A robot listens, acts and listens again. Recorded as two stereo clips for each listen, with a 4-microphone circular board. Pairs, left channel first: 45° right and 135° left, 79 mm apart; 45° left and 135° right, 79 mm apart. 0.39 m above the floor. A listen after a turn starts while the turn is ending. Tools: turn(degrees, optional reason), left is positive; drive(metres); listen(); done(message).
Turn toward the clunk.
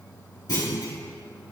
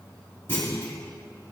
turn(degrees=-15, reason="The clunk: 15° right.")
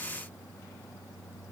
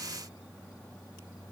done("Facing where the clunk came from. I can't hear it now.")